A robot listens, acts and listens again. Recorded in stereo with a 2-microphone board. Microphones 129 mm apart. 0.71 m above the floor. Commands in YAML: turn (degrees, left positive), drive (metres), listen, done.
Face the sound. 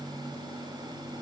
listen: true
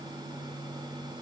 listen: true
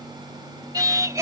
turn: -20
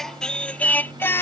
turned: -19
turn: 20
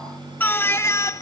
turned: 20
turn: 25
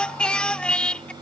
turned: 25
done: "Found it: singing, straight ahead."